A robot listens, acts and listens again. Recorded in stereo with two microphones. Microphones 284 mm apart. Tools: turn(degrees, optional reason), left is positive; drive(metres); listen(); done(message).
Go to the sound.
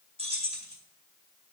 turn(degrees=-20, reason="The keys jangling: about 20° right or 160° right.")
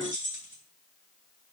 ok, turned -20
turn(degrees=-135, reason="So it is at 135° right.")
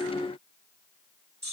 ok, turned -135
turn(degrees=-35, reason="The keys jangling is now 35° right.")
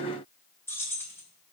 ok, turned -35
turn(degrees=10, reason="The keys jangling is now 10° left.")
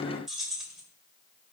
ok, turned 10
drive(metres=1.0)
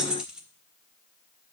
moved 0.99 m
drive(metres=1.0)
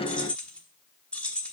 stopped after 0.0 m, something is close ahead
done("I am next to the keys jangling.")